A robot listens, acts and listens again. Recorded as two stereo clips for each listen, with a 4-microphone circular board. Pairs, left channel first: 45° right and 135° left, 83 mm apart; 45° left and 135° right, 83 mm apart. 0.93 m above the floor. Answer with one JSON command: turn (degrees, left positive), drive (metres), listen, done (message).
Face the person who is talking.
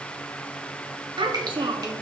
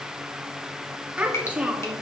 {"turn": 150}
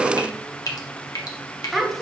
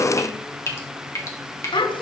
{"turn": 45}
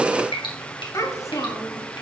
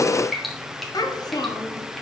{"done": "Found it: a child speaking, straight ahead."}